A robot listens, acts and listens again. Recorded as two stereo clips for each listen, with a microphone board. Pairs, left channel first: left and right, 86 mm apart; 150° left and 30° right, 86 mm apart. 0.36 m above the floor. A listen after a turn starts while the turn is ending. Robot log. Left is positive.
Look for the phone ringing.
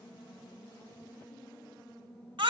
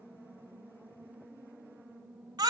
cmd idle
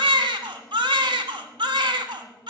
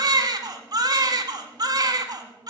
cmd idle
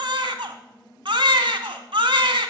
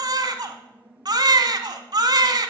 end: I can't make out a phone ringing to turn to.